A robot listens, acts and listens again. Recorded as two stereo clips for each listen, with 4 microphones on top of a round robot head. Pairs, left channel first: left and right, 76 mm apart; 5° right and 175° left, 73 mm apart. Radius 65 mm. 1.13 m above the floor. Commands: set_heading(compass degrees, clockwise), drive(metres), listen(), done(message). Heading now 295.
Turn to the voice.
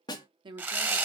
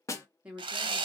set_heading(45)
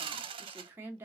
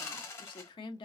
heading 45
set_heading(65)
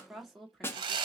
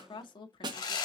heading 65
done("Facing the woman speaking, 1 to 2 m away.")